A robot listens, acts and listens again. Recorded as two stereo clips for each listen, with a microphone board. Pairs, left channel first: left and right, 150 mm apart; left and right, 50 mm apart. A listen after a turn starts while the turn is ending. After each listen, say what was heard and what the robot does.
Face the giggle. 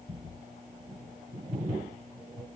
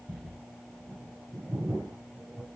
Keep listening.
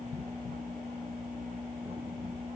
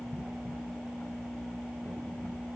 Keep listening.
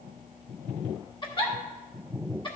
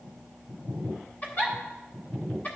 The giggle: about 35° left or 145° left. Turn 35° left.
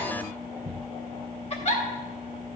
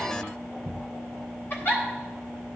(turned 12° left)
So it is at 135° left. Turn 135° left.
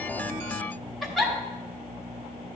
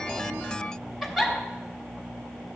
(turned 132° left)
Facing the giggle, 1 to 2 m away.